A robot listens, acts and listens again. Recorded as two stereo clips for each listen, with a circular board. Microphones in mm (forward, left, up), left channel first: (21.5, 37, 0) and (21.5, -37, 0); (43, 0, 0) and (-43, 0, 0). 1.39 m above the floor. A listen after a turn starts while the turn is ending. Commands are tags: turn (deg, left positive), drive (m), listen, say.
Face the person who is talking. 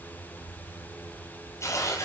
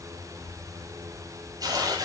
<listen/>
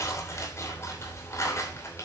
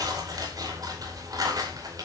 <listen/>
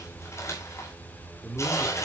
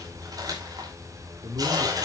<turn deg="-175"/>
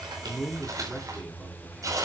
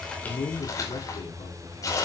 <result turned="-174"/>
<say>Found it: a man speaking, straight ahead.</say>